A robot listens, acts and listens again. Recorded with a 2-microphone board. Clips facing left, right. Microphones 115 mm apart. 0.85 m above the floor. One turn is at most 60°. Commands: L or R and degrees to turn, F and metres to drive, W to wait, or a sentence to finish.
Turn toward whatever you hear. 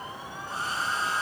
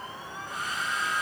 L30
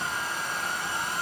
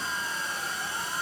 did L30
L60
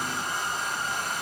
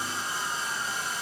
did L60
L60
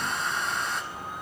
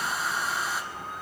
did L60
Facing the hair dryer, 2 to 4 m away.